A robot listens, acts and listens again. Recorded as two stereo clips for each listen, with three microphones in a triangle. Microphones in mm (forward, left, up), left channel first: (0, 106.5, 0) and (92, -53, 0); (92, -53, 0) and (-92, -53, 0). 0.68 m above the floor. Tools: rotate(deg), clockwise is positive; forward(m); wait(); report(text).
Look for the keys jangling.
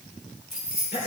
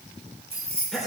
rotate(-155)
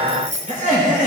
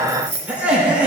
rotate(10)
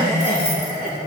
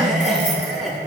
wait()
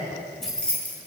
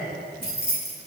rotate(-40)
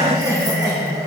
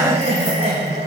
wait()
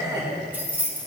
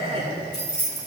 rotate(-20)
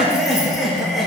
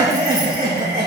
wait()
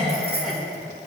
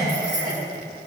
wait()
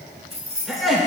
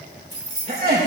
report("Facing the keys jangling.")